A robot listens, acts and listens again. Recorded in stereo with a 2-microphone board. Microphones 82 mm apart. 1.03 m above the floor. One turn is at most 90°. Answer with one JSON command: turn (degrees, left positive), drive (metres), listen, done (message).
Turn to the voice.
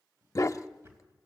{"listen": true}
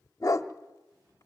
{"listen": true}
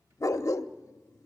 {"done": "I can't make out anyone speaking to turn to."}